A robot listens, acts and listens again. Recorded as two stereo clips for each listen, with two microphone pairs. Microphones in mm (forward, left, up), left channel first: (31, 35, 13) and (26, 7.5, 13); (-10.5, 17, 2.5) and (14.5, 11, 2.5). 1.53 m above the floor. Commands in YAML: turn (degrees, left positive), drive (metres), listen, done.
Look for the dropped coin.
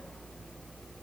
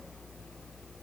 listen: true
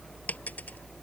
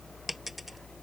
turn: 70
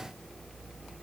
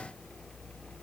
done: "Facing where the dropped coin came from. I can't hear it now."